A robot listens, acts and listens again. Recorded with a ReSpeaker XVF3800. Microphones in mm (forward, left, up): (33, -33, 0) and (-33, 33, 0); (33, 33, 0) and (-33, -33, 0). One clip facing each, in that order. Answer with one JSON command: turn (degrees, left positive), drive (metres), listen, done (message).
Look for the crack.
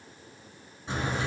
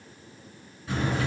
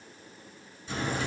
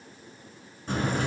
{"turn": -105}
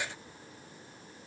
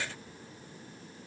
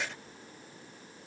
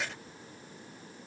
{"done": "Facing where the crack came from. I can't hear it now."}